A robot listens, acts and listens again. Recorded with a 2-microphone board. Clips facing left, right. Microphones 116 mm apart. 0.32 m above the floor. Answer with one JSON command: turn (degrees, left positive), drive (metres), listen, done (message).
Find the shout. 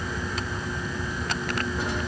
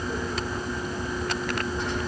{"listen": true}
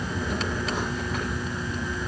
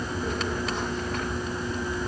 {"listen": true}
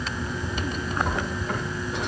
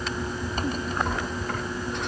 {"done": "I can't make out a shout, only a drawer."}